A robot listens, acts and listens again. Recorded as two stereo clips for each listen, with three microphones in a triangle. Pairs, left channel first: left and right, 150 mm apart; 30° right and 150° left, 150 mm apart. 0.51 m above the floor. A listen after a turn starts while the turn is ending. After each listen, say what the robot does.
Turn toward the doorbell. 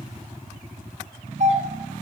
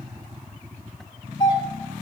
Turn 80° right.
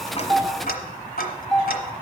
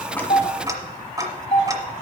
Found it: a doorbell, straight ahead.